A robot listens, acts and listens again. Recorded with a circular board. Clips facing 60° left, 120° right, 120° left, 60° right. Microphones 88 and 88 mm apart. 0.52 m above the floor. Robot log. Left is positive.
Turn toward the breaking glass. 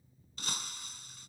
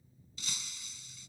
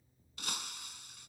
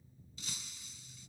note: The breaking glass: 100° left.
cmd yaw +100
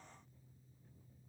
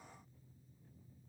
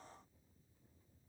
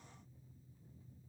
end: I heard breaking glass from this way, but can't make it out now.